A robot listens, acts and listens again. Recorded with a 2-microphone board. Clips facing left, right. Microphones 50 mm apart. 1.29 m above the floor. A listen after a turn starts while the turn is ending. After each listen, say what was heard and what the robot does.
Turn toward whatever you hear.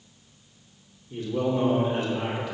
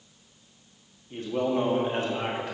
The man speaking: about 40° right or 140° right. Turn 40° right.
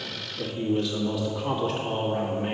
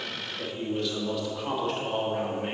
Found it: a man speaking, straight ahead.